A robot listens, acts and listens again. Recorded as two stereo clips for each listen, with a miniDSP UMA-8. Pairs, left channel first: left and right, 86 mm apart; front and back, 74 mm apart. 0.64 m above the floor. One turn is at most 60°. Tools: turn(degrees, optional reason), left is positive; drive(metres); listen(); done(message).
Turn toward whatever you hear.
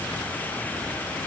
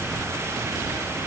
listen()
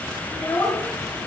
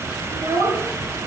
turn(degrees=60, reason="The child speaking: 150° left.")
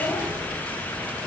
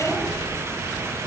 turn(degrees=60, reason="Nothing new. It was at 90° left.")
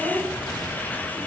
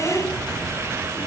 turn(degrees=60, reason="The child speaking is now 60° left.")
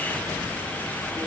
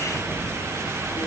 listen()
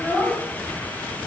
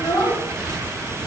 turn(degrees=25, reason="The child speaking is now 25° left.")
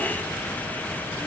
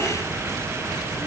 listen()
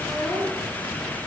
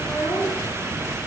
done("Facing the child speaking.")